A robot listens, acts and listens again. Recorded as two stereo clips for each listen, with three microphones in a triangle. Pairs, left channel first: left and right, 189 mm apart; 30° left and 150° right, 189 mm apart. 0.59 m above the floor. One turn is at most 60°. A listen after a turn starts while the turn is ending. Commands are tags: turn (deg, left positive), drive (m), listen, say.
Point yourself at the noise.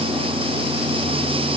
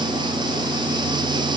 <listen/>
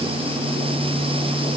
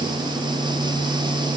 <listen/>
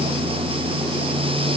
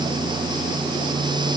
<say>I can't make out anything to turn to.</say>